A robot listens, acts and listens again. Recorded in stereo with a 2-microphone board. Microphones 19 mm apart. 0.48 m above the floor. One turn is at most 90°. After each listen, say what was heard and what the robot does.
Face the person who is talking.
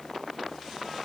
Keep listening.
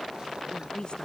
The woman speaking: about 50° left or 130° left. Turn 50° left.
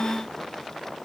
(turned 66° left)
Keep listening.
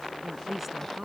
So it is at 15° right. Turn 15° right.
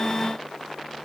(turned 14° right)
Keep listening.
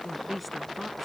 Found it: a woman speaking, straight ahead.